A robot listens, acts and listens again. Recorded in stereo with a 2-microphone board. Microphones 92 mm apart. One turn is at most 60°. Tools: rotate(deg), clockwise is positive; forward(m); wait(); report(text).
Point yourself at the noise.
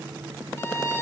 rotate(-30)
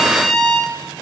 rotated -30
report("Found it: a violin, straight ahead.")